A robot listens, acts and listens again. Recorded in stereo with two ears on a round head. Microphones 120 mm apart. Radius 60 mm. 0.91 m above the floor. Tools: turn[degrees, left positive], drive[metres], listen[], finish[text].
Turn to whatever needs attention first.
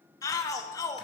Thought: The shout: about 25° left or 155° left.
Action: turn[25]
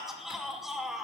Action: finish[Found it: a shout, straight ahead.]